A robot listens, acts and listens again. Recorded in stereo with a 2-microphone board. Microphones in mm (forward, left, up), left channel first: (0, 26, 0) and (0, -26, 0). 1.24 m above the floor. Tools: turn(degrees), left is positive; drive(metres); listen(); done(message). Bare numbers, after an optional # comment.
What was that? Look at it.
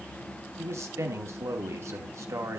# The man speaking: about 60° right or 120° right.
turn(-60)
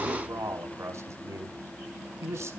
# So it is at 60° right.
turn(-60)
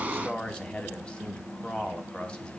# The man speaking is now 20° left.
turn(20)
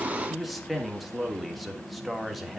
done("Facing the man speaking.")